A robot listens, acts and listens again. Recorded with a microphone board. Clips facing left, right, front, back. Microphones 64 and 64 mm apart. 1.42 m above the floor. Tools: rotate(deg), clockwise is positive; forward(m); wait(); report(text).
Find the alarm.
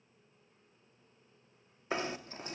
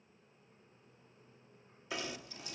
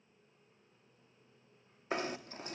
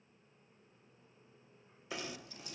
wait()
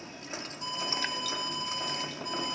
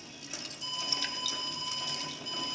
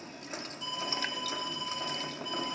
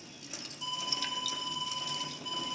rotate(-105)
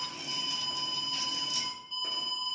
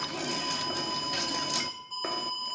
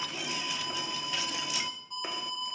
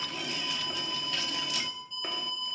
rotate(20)
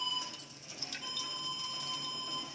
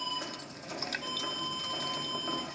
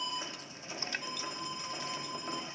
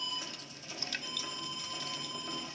report("Found it: an alarm, straight ahead.")